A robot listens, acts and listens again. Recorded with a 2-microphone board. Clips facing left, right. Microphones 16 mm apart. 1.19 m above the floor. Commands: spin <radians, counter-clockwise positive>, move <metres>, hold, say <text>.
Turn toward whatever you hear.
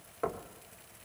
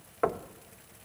spin -0.61
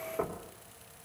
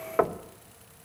spin -1.92
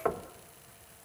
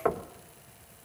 say Facing the knocking, 1 to 2 m away.